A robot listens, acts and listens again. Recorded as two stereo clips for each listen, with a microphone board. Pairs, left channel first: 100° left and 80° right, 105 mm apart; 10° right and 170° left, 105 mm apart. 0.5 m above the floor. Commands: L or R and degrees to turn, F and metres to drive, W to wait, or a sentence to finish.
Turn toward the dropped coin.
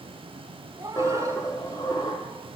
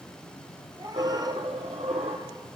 L155
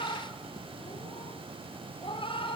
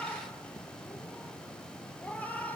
I heard a dropped coin from this way, but can't make it out now.